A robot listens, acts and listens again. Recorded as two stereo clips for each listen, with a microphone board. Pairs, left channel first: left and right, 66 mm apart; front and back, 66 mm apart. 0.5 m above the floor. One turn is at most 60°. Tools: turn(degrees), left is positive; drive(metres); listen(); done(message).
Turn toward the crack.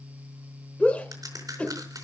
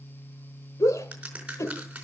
turn(degrees=-60)
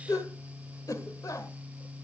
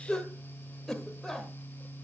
turn(degrees=-50)
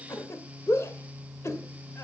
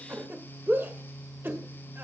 done("I heard a crack from this way, but can't make it out now.")